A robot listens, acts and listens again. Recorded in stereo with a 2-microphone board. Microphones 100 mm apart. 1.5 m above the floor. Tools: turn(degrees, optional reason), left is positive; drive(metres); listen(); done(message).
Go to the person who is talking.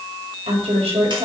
turn(degrees=-90)
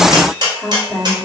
turn(degrees=-10, reason="So it is at 10° right.")
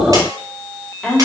drive(metres=1.0)
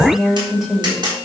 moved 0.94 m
drive(metres=1.0)
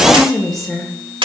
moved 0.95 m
drive(metres=1.0)
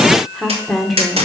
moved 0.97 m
drive(metres=1.0)
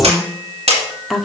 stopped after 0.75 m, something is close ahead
done("I am next to the woman speaking.")